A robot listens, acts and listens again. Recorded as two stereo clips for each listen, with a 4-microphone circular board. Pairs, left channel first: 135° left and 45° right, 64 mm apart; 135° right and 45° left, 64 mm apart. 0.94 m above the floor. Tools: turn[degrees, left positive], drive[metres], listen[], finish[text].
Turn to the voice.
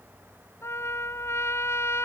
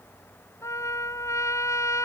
Action: listen[]
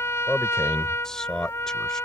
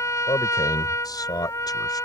Thought: The man speaking: 145° right.
Action: turn[-145]
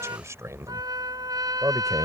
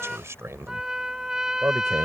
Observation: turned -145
Action: finish[Facing the man speaking.]